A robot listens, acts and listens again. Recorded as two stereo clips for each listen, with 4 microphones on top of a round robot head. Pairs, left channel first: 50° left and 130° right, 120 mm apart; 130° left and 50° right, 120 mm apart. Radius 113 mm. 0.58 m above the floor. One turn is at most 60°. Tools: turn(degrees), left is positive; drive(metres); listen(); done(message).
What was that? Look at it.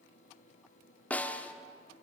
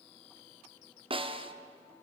turn(degrees=-25)
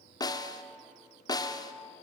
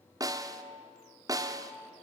done("Facing the snare drum, 1 to 2 m away.")